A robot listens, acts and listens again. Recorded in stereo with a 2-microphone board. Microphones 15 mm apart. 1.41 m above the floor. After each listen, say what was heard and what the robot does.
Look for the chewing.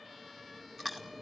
Turn 30° right.
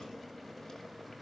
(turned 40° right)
Keep listening.
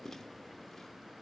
So it is at 25° left. Turn 25° left.
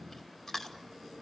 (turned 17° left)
The chewing is now 10° left. Turn 10° left.
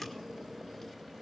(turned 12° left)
Keep listening.
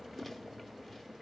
Facing the chewing, 2 to 4 m away.